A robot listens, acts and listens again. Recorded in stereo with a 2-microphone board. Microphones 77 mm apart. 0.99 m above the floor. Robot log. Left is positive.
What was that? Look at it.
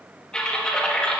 cmd yaw +30
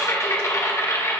note: So it is at 140° left.
cmd yaw +140
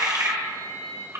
note: The typing on a keyboard is now 40° right.
cmd yaw -40
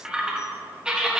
note: The typing on a keyboard is now 10° right.
cmd yaw -10
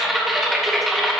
end: Found it: typing on a keyboard, straight ahead.